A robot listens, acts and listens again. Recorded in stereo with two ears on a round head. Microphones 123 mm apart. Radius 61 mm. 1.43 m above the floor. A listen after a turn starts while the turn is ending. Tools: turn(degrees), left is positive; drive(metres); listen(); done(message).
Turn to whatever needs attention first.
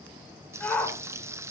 turn(degrees=30)
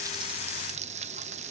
listen()
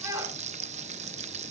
turn(degrees=-20)
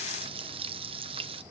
listen()
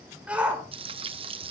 turn(degrees=-10)
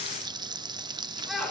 done("Found it: a shout, straight ahead.")